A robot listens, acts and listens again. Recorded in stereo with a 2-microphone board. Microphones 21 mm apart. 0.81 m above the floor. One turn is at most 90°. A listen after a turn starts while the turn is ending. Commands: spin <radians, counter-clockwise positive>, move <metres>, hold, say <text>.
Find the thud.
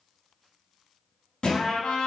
spin 0.87
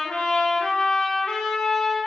hold
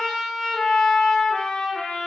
say I heard a thud, but can't make it out now. It was about straight ahead or 80° left.